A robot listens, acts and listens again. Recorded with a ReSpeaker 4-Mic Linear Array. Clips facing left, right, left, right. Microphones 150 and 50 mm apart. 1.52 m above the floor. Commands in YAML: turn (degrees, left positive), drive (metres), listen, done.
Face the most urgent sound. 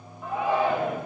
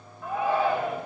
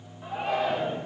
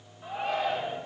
turn: 15
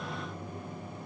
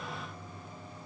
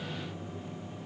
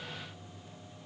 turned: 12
listen: true
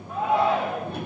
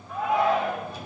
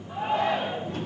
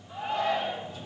turn: 150
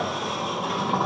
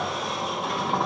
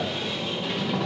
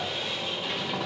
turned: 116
turn: 35
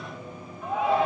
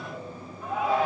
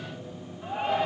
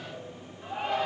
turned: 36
done: "Facing the shout."